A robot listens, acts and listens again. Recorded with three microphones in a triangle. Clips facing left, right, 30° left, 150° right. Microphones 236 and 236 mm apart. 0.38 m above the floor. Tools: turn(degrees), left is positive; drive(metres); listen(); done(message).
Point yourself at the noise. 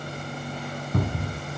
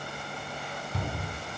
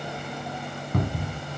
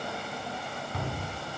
turn(degrees=65)
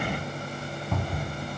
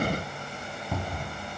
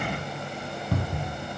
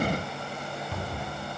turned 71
turn(degrees=-10)
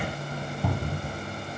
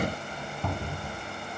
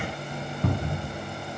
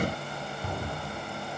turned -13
done("Found it: a cupboard door, straight ahead, 2 to 4 m away.")